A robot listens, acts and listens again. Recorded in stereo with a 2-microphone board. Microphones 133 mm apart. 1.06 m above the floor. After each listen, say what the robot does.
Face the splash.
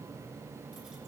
Keep listening.
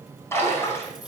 Turn 20° left.
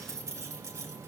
Keep listening.
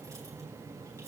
I heard a splash, but can't make it out now. It was about straight ahead or 140° left.